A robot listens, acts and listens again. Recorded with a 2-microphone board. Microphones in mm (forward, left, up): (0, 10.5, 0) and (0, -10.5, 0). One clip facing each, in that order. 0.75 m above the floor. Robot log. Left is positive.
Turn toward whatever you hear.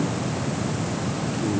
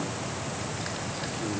cmd idle
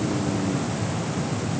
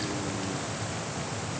cmd idle
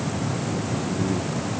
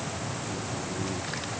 end: I can't make out anything.